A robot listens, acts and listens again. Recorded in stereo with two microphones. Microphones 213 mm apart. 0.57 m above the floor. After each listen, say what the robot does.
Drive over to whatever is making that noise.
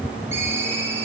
Turn 30° right.
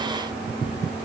Keep listening.
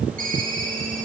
Turn 140° right.
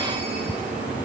Keep listening.
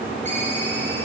Keep listening.
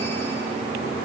I heard a ringtone from this way, but can't make it out now. I did not reach it.